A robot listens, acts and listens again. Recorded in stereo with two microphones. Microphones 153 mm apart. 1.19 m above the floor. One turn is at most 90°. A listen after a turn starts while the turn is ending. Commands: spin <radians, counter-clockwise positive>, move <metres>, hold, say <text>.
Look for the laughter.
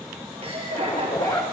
spin -0.79
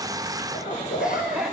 spin -0.17
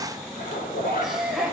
say Facing the laughter, over 4 m away.